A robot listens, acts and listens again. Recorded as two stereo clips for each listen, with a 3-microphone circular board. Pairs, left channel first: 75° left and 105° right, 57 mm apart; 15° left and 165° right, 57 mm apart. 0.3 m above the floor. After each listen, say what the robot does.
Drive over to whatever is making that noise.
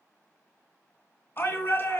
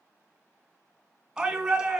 Turn 120° left.
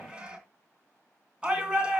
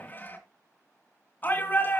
Turn 35° right.
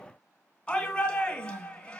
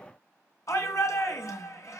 Drive 1.0 m forward.
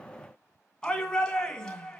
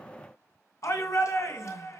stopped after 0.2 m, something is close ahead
Something is in my way. I am facing the shout but have not reached it.